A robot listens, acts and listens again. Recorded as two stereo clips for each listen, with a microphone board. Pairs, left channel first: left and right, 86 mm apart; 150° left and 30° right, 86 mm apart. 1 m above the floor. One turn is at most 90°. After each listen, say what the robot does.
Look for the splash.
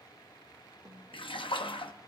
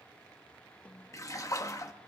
Turn 90° left.
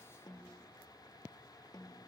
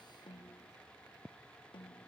Turn 10° left.
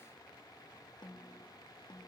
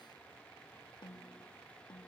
I heard a splash from this way, but can't make it out now.